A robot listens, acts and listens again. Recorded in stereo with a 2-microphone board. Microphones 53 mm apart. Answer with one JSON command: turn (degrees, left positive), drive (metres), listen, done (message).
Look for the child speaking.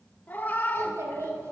{"turn": -60}
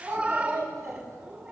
{"turn": -75}
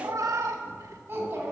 {"turn": -40}
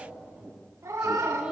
{"turn": -15}
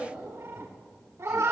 {"done": "Facing the child speaking, 2 to 4 m away."}